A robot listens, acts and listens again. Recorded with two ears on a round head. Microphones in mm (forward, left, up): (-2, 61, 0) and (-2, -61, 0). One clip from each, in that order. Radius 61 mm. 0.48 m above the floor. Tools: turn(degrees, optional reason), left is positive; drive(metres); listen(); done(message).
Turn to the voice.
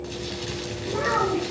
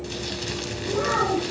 turn(degrees=65, reason="The child speaking: about 65° left or 115° left.")
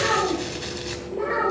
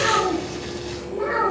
done("Facing the child speaking, over 4 m away.")